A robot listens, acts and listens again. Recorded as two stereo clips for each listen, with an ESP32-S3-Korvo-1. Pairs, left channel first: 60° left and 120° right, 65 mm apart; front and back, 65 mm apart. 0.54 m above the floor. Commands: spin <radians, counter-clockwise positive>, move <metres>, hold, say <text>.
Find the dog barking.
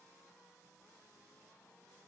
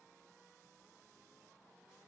hold
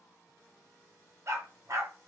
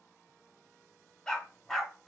spin -1.48
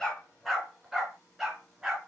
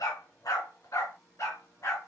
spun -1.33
spin -0.70
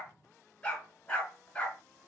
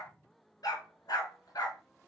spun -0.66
spin -0.17
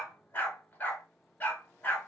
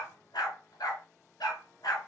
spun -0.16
say Facing the dog barking.